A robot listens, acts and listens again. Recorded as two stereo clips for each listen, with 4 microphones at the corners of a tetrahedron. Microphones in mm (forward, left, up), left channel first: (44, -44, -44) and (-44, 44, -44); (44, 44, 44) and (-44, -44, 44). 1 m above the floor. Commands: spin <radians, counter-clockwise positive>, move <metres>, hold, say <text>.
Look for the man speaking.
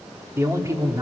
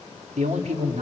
spin -2.88
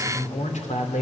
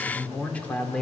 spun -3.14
spin -0.61
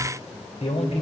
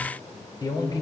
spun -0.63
spin -0.26
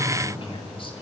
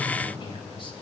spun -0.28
say Facing the man speaking, 2 to 4 m away.